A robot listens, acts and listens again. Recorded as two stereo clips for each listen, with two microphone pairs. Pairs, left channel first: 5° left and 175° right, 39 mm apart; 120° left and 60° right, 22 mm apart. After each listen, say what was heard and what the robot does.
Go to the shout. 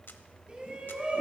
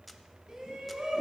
The shout: 115° right. Turn 115° right.
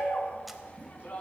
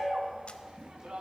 The shout is now 45° right. Turn 45° right.
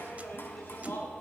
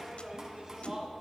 Drive 1.0 m forward.
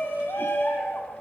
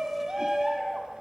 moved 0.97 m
The shout is now 10° right. Turn 10° right.
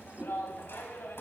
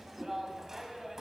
Drive 1.0 m forward.
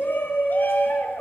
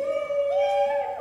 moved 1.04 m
The shout is now 10° left. Turn 10° left.
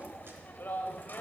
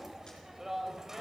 Drive 1.0 m forward.
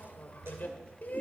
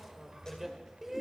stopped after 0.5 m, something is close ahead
Arrived at the shout, straight ahead.